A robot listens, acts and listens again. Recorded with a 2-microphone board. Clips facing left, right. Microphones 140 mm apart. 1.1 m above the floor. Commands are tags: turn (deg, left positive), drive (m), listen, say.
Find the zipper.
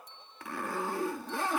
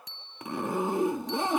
<turn deg="-20"/>
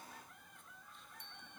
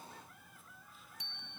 <listen/>
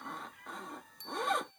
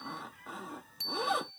<say>Facing the zipper.</say>